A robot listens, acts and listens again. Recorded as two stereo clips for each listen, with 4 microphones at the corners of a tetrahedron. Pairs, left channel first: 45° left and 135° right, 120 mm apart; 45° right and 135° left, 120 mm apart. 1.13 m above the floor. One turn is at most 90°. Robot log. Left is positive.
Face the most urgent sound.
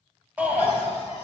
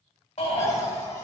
note: The shout: 60° right.
cmd yaw -60
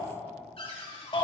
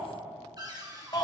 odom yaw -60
end: Found it: a shout, straight ahead, 2 to 4 m away.